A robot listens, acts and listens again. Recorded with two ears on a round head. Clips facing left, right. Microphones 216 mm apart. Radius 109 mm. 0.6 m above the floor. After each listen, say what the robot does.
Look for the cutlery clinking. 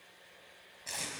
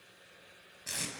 Keep listening.
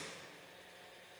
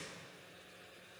Keep listening.
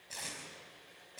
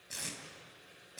I can't make out cutlery clinking, only tape being pulled.